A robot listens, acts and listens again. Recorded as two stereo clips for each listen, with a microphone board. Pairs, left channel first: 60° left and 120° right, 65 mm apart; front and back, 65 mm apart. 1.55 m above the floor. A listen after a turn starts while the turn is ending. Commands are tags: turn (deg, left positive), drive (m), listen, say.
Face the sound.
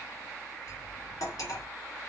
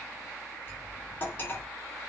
<turn deg="55"/>
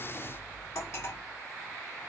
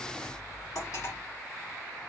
<turn deg="20"/>
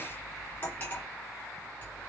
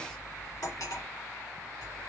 <say>Facing the cutlery clinking.</say>